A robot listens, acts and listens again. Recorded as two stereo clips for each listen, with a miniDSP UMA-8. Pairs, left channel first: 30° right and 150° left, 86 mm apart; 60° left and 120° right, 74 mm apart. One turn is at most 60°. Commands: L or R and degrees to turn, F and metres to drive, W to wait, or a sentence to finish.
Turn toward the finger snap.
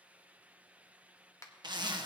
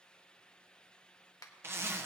L25
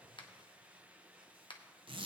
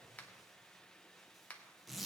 R10
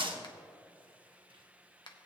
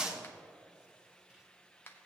Facing the finger snap, 1 to 2 m away.